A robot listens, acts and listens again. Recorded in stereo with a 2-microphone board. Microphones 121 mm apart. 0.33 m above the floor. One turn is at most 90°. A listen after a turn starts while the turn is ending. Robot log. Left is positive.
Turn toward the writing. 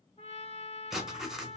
cmd yaw -30
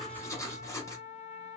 note: So it is at 25° left.
cmd yaw +25
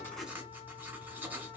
note: The writing is now 15° right.
cmd yaw -15
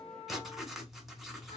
end: Facing the writing, under 1 m away.